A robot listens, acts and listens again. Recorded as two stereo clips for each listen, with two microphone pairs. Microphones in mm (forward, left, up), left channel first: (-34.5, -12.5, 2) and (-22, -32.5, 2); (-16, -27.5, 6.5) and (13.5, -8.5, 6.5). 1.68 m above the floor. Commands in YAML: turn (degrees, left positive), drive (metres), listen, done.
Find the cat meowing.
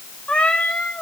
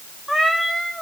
turn: 125
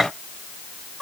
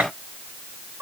turn: 25
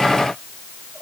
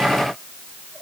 listen: true
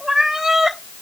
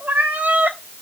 turn: 10
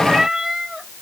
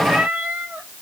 done: "Facing the cat meowing."